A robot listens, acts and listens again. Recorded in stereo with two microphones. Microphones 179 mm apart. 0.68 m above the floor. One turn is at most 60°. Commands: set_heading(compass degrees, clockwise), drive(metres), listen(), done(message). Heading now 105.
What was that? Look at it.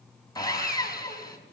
set_heading(85)
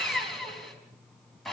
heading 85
done("Found it: sawing, straight ahead.")